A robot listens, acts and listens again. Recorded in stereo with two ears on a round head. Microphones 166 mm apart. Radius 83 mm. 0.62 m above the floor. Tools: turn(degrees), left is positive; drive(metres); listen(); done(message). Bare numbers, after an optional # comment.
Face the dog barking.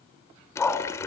turn(30)
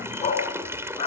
# So it is at 150° left.
turn(150)
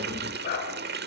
# The dog barking is now 50° left.
turn(50)
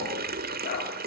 # The dog barking is now 45° left.
turn(45)
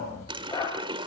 # The dog barking is now 20° left.
turn(20)
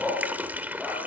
done("Facing the dog barking, over 4 m away.")